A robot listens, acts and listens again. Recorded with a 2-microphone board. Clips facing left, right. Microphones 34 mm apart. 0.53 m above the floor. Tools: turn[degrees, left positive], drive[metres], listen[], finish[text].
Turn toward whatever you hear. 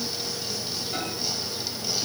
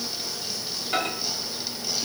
Thought: The microwave: about 55° right or 125° right.
Action: turn[-55]
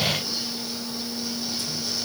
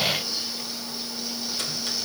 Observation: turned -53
Action: listen[]
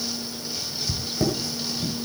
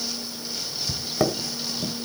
Thought: So it is at 65° right.
Action: turn[-65]
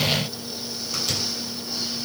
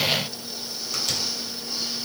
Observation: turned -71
Action: finish[Facing the microwave.]